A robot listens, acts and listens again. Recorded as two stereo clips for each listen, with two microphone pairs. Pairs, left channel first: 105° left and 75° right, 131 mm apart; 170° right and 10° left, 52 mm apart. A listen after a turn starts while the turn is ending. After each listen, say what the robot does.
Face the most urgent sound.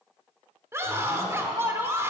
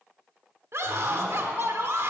Turn 10° right.
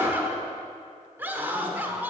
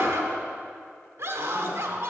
Found it: a scream, straight ahead.